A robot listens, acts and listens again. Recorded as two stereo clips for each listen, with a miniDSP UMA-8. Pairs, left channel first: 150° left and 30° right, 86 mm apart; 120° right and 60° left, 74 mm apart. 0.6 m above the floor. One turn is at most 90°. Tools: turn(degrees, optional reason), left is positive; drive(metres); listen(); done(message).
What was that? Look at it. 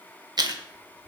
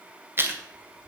done("Facing the chewing.")